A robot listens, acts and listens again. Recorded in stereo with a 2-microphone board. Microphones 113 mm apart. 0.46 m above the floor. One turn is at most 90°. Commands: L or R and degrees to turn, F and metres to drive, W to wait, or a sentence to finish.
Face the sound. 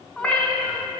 L30
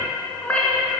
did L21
L30
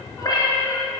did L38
L90
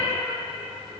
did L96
L60
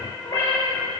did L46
L20
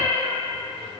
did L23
Facing the cat meowing, over 4 m away.